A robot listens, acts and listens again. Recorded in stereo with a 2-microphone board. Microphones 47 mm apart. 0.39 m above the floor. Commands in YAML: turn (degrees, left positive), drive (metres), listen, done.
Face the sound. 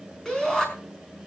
turn: 30
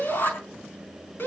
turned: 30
turn: 130
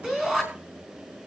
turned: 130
turn: -10
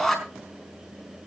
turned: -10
done: "Facing the shout, over 4 m away."